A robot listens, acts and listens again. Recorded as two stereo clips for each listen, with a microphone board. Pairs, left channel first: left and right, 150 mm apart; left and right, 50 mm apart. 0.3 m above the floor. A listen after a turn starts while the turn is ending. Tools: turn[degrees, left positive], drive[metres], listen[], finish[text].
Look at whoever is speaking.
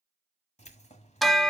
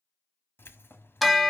Action: listen[]
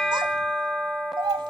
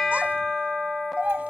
Thought: The child speaking: about 30° right or 150° right.
Action: turn[-30]
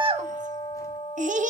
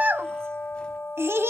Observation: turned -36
Thought: So it is at 110° right.
Action: turn[-110]
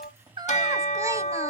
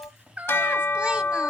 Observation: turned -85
Thought: Nothing new. It was at 25° right.
Action: turn[-25]
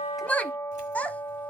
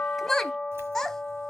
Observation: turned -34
Thought: The child speaking is now 10° left.
Action: turn[10]
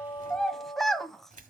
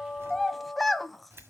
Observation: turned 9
Action: finish[Facing the child speaking, under 1 m away.]